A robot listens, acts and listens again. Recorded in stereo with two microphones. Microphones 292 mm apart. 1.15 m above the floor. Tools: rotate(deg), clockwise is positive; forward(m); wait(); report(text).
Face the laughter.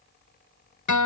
wait()
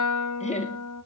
rotate(-25)
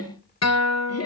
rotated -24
rotate(-125)
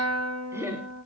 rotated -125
rotate(10)
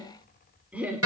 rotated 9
report("Found it: laughter, straight ahead.")